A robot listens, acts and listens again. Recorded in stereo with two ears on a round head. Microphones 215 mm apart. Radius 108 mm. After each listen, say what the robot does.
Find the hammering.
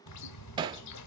Turn 20° right.
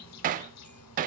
Turn 140° right.
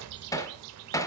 Turn 15° left.
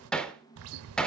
Facing the hammering, 1 to 2 m away.